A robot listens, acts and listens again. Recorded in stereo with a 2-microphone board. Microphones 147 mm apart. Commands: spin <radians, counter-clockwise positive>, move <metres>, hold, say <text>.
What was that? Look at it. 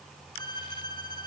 spin 0.52
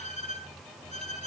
spin 2.18
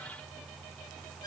hold
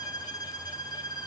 spin 0.52
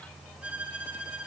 spin -0.17
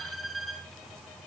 say Facing the violin.